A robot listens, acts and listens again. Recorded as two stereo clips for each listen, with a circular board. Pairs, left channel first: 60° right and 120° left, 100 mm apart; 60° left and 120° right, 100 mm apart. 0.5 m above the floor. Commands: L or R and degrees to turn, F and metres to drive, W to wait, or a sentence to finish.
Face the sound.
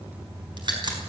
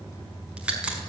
L160
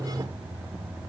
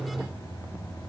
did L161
Facing where the crack came from. I can't hear it now.